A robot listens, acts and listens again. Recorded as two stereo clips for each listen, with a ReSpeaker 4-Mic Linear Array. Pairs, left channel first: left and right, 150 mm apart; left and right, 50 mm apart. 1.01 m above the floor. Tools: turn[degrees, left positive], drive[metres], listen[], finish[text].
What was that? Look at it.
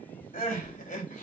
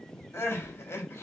Thought: The crying: about 55° left or 125° left.
Action: turn[55]
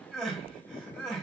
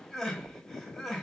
Action: finish[Found it: crying, straight ahead.]